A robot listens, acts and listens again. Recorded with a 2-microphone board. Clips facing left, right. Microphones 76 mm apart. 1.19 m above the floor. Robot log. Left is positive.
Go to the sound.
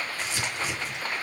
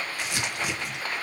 note: The crumpling: about 65° right or 115° right.
cmd yaw -65
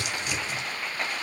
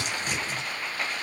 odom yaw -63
note: So it is at 40° right.
cmd yaw -40
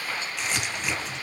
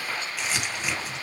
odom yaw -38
cmd fwd 1.0
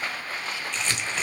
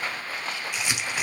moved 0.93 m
note: The crumpling is now 15° right.
cmd yaw -15
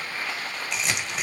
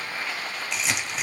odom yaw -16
cmd fwd 1.0
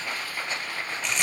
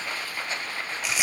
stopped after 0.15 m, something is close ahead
end: I am next to the crumpling.